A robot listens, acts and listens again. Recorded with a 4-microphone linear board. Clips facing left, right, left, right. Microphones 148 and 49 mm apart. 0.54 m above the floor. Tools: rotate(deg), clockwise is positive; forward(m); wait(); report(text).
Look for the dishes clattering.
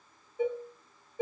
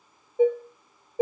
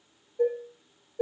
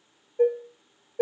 rotate(45)
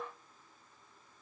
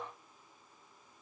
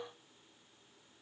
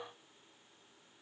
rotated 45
wait()
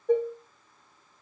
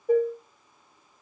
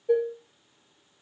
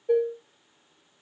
report("Facing the dishes clattering, under 1 m away.")